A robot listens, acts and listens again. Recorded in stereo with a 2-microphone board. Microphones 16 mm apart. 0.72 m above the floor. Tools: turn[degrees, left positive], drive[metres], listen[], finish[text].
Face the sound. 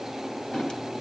Thought: The drawer: about 65° left or 115° left.
Action: turn[65]
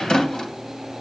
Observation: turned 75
Thought: So it is at 40° left.
Action: turn[40]
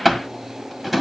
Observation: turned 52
Thought: The drawer is now 10° right.
Action: turn[-10]
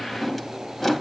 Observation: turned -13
Action: finish[Found it: a drawer, straight ahead, 2 to 4 m away.]